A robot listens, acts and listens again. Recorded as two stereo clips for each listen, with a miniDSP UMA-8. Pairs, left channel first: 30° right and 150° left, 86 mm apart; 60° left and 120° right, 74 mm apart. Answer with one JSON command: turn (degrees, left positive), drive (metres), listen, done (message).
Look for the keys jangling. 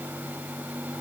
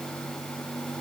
{"listen": true}
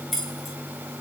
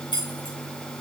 {"turn": 60}
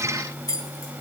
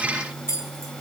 {"turn": 15}
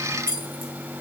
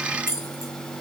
{"turn": 10}
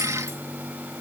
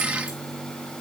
{"listen": true}
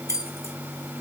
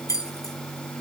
{"turn": 20}
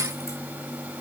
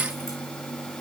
{"listen": true}
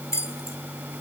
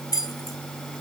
{"turn": 20}
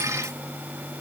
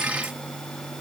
{"listen": true}
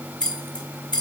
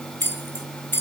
{"done": "Facing the keys jangling, 2 to 4 m away."}